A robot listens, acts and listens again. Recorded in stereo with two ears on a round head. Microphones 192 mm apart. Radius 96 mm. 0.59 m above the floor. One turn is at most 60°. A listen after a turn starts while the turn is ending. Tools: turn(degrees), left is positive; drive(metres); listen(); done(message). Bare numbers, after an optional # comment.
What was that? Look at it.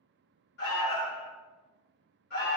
# The alarm: about 50° left or 130° left.
turn(50)
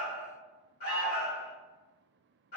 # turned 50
# So it is at 60° left.
turn(60)
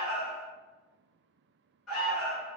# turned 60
done("Found it: an alarm, straight ahead.")